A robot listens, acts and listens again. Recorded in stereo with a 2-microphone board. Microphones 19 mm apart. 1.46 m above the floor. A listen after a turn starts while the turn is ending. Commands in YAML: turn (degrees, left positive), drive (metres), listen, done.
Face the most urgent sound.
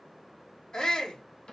turn: 45
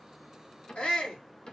turn: 90
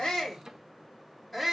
done: "Found it: a shout, straight ahead."